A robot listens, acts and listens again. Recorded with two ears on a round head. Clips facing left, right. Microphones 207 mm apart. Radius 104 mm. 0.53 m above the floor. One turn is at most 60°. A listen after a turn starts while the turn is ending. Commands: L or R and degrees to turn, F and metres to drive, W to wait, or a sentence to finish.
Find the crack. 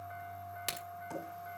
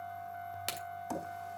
L30
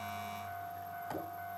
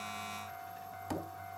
W
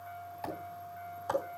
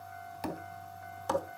I heard a crack, but can't make it out now. It was about 30° right or 150° left.